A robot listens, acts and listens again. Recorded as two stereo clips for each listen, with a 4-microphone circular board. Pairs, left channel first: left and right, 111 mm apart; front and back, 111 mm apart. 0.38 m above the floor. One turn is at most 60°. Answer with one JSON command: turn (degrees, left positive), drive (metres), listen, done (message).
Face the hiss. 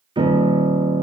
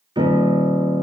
{"listen": true}
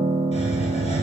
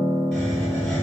{"turn": 60}
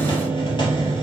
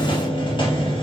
{"turn": 45}
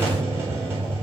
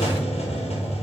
{"turn": -20}
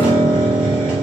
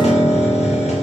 {"turn": -10}
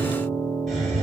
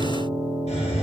{"done": "Facing the hiss, 2 to 4 m away."}